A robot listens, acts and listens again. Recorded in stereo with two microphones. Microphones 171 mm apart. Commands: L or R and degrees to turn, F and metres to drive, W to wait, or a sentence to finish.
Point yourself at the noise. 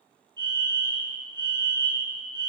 R25
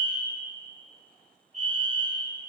R120
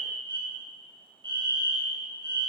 R35
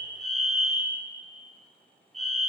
Found it: a fire alarm, straight ahead.